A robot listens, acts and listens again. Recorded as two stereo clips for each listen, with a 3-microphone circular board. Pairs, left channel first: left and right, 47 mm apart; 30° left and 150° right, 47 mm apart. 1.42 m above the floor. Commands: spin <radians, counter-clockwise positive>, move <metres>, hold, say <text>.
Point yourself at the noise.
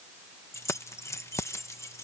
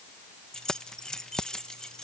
spin 1.83
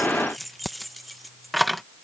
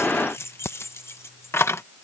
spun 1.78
say Facing the keys jangling.